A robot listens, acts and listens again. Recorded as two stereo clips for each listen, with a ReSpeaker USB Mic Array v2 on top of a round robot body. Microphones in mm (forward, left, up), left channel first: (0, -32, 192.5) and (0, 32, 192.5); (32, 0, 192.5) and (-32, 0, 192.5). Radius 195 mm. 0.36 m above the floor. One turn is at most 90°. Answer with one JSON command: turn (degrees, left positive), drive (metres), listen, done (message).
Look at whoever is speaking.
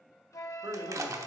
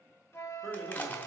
{"turn": 90}
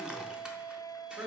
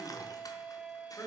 {"turn": 45}
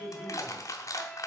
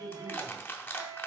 {"turn": -25}
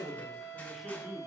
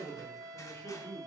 {"done": "Facing the man speaking."}